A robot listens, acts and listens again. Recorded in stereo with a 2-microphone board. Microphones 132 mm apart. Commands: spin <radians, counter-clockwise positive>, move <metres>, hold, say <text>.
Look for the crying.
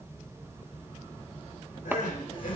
spin 1.57
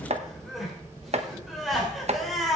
say Facing the crying, 2 to 4 m away.